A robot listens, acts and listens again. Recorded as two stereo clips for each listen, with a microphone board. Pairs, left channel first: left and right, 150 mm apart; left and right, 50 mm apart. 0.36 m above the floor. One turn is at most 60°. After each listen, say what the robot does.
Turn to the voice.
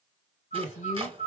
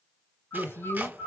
Turn 55° left.
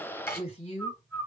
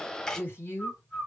Turn 55° left.
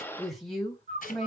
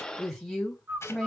Found it: a woman speaking, straight ahead, 2 to 4 m away.